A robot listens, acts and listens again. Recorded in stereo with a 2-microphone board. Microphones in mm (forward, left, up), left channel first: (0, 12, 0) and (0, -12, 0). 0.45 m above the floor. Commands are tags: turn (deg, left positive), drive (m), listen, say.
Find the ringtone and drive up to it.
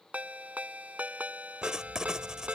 <turn deg="-90"/>
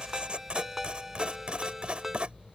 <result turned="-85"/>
<turn deg="-15"/>
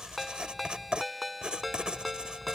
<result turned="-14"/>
<drive m="1.0"/>
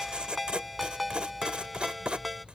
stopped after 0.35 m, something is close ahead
<say>Something is in my way. I am facing the ringtone but have not reached it.</say>